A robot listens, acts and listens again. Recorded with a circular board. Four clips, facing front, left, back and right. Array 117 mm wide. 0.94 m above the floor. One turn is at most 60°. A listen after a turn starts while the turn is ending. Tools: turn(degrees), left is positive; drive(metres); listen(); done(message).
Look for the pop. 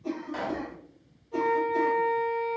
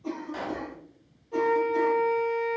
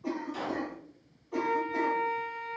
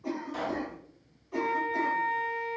turn(degrees=20)
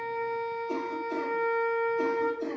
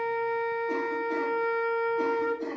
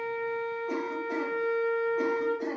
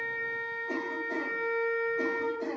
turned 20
done("Facing where the pop came from. I can't hear it now.")